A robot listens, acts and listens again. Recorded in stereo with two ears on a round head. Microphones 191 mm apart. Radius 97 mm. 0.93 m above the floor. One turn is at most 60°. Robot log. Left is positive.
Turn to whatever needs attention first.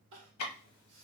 note: The crying: about 65° right or 115° right.
cmd yaw -60
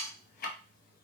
cmd idle
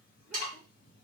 cmd idle
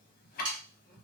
end: I heard crying, but can't make it out now. It was about 5° right or 55° right.